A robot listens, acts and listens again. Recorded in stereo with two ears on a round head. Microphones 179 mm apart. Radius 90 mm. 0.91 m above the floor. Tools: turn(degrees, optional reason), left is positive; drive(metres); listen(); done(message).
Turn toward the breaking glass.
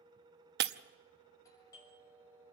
turn(degrees=-50, reason="The breaking glass: about 50° right or 130° right.")
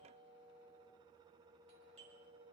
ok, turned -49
listen()
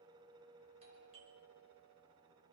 done("I heard breaking glass, but can't make it out now. It was about 5° right or 80° right.")